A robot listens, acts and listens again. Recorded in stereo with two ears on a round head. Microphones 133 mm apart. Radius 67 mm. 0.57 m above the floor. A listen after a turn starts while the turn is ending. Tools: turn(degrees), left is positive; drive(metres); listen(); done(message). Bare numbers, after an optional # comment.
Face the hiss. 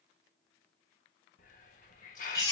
# The hiss: about 55° left or 125° left.
turn(55)
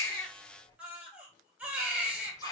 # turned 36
# So it is at 25° left.
turn(25)
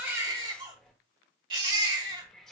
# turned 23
done("Found it: a hiss, straight ahead.")